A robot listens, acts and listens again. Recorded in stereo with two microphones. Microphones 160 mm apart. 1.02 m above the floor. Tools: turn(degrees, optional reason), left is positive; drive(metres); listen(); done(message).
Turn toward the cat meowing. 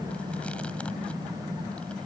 listen()
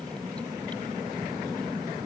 listen()
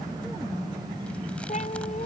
turn(degrees=45, reason="The cat meowing: about 45° left or 135° left.")
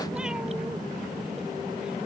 listen()
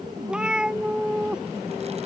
done("Found it: a cat meowing, straight ahead.")